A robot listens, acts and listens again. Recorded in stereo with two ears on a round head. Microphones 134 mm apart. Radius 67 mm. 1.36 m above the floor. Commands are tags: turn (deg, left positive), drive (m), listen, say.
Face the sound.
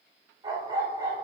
<turn deg="-25"/>
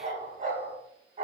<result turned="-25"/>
<turn deg="-130"/>
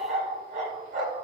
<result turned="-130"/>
<turn deg="-50"/>
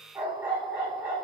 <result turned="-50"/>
<turn deg="-10"/>
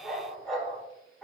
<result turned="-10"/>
<say>Found it: a dog barking, straight ahead.</say>